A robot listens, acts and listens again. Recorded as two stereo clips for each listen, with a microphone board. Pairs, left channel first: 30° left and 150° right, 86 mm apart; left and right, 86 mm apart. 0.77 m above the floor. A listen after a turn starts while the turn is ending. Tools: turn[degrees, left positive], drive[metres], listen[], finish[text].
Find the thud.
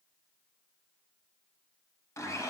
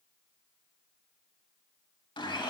Action: listen[]
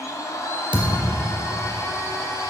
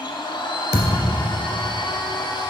Thought: The thud: 130° right.
Action: turn[-130]
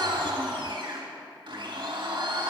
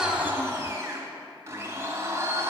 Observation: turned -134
Action: finish[Facing where the thud came from. I can't hear it now.]